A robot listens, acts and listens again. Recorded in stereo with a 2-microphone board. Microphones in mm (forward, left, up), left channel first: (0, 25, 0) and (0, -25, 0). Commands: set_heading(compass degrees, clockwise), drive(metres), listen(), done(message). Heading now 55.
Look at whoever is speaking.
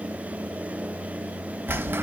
listen()
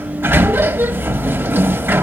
listen()
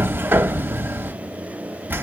done("I can't make out anyone speaking, only a sliding door.")